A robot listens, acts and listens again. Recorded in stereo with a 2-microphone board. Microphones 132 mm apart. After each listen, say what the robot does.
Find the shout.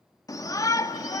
Turn 25° left.
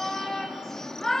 Found it: a shout, straight ahead, 1 to 2 m away.